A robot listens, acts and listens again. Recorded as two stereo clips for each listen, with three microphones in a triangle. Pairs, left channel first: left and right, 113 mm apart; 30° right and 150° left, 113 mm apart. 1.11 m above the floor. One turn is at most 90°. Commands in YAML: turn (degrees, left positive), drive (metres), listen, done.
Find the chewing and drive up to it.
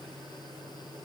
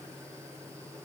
listen: true
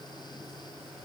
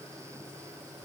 listen: true
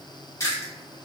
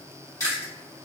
turn: 30
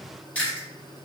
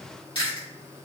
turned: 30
turn: 15
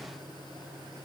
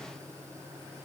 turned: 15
listen: true
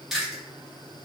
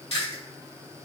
drive: 1.0
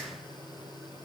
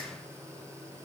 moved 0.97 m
listen: true
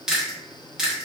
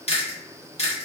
drive: 1.0
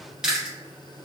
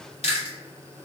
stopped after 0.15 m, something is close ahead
done: "Arrived at the chewing, straight ahead."